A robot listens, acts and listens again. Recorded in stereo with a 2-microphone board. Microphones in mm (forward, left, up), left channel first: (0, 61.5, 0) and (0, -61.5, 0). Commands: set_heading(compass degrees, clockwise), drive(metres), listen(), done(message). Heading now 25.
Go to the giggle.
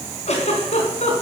set_heading(320)
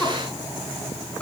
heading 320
listen()
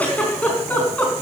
set_heading(305)
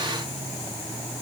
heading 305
listen()
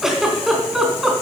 drive(1.0)
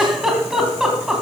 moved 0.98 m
drive(1.0)
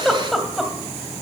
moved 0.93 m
drive(1.0)
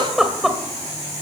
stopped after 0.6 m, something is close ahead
done("Arrived at the giggle, straight ahead.")